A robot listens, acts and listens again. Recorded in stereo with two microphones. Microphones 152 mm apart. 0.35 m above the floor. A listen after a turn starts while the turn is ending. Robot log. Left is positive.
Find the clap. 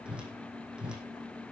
cmd idle
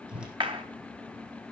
note: The clap: about 35° right or 145° right.
cmd yaw -35
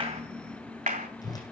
note: So it is at 105° right.
cmd yaw -105
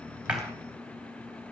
cmd idle
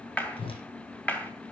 note: The clap is now 10° left.
cmd yaw +10
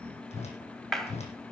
end: Facing the clap, 2 to 4 m away.